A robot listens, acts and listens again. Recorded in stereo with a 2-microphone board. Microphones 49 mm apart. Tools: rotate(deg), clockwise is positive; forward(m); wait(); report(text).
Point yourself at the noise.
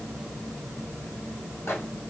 rotate(-65)
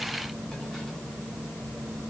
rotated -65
wait()
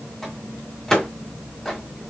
rotate(-15)
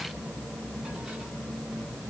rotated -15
wait()
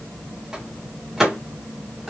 report("Found it: a microwave, straight ahead, 1 to 2 m away.")